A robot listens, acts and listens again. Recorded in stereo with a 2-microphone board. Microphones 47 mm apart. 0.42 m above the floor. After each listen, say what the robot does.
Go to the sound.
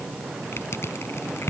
Turn 70° left.
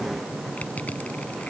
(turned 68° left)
Keep listening.
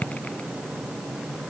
Turn 35° left.
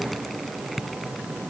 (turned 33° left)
Drive 1.0 m forward.
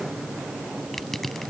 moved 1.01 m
Drive 1.0 m forward.
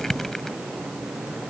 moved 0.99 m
Turn 10° left.
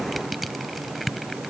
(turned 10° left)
Drive 1.0 m forward.
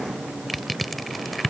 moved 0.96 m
Drive 1.0 m forward.
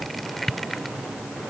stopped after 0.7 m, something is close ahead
Arrived at the crushing, straight ahead.